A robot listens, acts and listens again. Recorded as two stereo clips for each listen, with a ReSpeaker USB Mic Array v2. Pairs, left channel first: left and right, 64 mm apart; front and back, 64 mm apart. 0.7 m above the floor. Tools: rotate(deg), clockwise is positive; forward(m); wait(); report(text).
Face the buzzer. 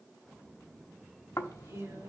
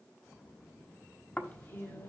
wait()
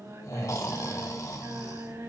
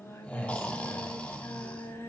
wait()
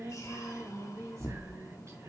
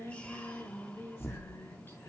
report("I can't make out a buzzer, only snoring and singing.")